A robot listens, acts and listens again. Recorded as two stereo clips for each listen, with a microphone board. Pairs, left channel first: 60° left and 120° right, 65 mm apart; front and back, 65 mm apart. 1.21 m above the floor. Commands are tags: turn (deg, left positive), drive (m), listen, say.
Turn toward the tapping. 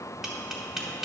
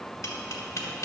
<turn deg="-40"/>
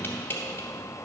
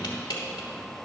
<say>Facing the tapping, 1 to 2 m away.</say>